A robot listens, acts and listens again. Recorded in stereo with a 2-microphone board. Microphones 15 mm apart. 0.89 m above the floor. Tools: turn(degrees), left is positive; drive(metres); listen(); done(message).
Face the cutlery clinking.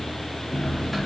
turn(degrees=30)
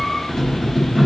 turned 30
turn(degrees=140)
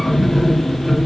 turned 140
turn(degrees=15)
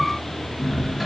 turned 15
done("Facing the cutlery clinking.")